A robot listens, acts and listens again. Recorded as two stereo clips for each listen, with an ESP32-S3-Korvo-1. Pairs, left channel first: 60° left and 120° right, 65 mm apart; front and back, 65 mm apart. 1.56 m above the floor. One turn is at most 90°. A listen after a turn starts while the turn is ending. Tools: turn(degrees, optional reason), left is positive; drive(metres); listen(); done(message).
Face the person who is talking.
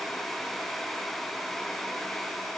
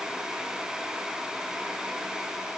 listen()
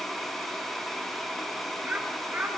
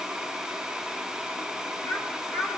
turn(degrees=-55, reason="The child speaking: 55° right.")
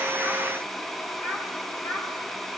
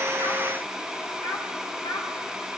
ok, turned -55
done("Facing the child speaking, over 4 m away.")